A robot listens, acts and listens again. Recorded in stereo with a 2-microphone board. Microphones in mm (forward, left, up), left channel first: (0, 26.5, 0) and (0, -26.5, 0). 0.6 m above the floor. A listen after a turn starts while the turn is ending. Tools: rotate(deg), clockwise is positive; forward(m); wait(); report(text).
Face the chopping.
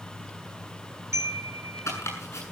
rotate(-70)
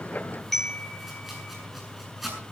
report("Found it: chopping, straight ahead, over 4 m away.")